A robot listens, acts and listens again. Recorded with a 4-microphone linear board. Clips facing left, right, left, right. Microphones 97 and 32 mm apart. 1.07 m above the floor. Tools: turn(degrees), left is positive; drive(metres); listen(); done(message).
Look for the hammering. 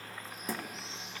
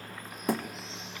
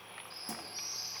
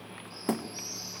turn(degrees=-60)
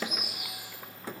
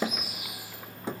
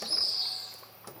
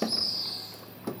turn(degrees=-25)
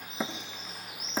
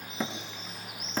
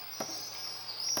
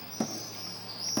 turn(degrees=10)
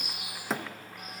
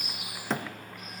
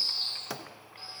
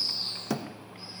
done("Found it: hammering, straight ahead, under 1 m away.")